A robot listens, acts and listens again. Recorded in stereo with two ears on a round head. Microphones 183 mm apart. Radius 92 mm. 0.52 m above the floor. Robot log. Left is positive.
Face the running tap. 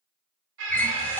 cmd yaw +30
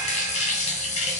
note: So it is at 145° left.
cmd yaw +145
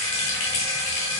note: The running tap is now 70° left.
cmd yaw +70
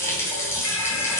note: The running tap is now 15° left.
cmd yaw +15
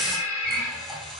end: Found it: a running tap, straight ahead.